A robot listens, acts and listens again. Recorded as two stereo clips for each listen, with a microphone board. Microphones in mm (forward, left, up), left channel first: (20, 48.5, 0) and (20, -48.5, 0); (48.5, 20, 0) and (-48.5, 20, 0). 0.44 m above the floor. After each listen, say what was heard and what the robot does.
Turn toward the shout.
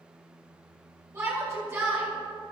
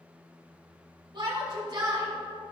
The shout: 150° right. Turn 150° right.
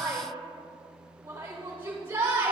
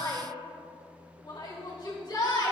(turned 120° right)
The shout is now 30° right. Turn 30° right.
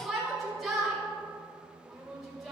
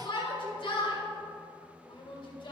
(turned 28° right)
Found it: a shout, straight ahead.